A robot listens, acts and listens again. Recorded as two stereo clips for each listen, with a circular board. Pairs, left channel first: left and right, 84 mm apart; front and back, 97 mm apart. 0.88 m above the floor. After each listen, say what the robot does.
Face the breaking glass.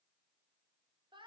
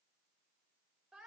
Keep listening.
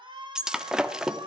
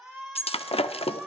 Turn 10° right.
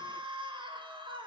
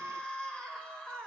I heard breaking glass from this way, but can't make it out now.